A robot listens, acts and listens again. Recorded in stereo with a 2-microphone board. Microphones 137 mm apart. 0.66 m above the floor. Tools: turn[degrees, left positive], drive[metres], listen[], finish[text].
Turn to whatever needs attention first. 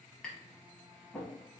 Action: listen[]
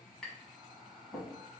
Action: listen[]
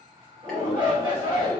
Thought: The shout: about 35° right or 145° right.
Action: turn[-35]
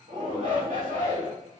Thought: So it is at 105° right.
Action: turn[-105]
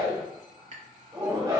Thought: The shout is now 35° right.
Action: turn[-35]
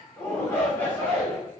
Thought: The shout is now 15° left.
Action: turn[15]
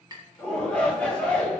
Thought: The shout is now 10° left.
Action: turn[10]
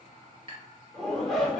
Action: finish[Found it: a shout, straight ahead, 1 to 2 m away.]